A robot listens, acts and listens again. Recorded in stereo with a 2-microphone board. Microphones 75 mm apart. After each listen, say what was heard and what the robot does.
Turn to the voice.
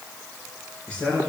The man speaking: about 15° left or 165° left. Turn 15° left.
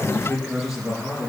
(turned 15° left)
Turn 30° left.
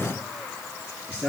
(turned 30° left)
So it is at 15° right. Turn 15° right.
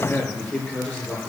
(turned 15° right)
Found it: a man speaking, straight ahead.